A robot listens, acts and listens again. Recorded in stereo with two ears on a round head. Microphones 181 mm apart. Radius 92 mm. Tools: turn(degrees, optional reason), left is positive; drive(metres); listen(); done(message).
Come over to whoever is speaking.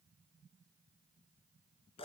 listen()
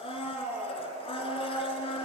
listen()
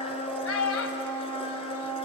turn(degrees=70, reason="The child speaking: about 70° left or 110° left.")
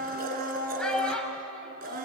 drive(metres=1.0)
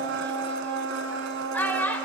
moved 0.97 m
turn(degrees=10, reason="The child speaking is now 10° left.")
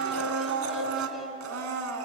listen()
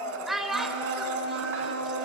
drive(metres=1.0)
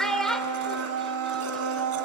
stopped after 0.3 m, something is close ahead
done("I am next to the child speaking.")